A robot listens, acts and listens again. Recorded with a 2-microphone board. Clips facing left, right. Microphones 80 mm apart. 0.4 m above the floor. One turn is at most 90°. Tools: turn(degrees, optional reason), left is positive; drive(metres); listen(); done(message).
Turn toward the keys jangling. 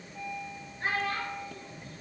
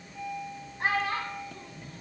listen()
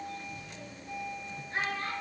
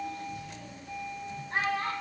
listen()
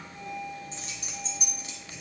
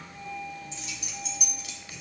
turn(degrees=30, reason="The keys jangling: about 30° left or 150° left.")
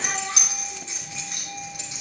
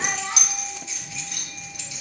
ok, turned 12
turn(degrees=30, reason="The keys jangling: about 30° left or 150° left.")
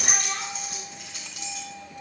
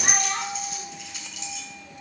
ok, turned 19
turn(degrees=45, reason="The keys jangling: about 45° left or 135° left.")
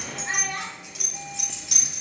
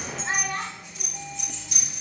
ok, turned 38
turn(degrees=90, reason="So it is at 100° left.")
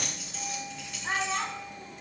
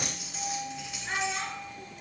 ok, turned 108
turn(degrees=-10, reason="The keys jangling is now 10° right.")
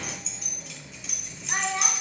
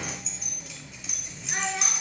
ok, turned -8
done("Facing the keys jangling, 2 to 4 m away.")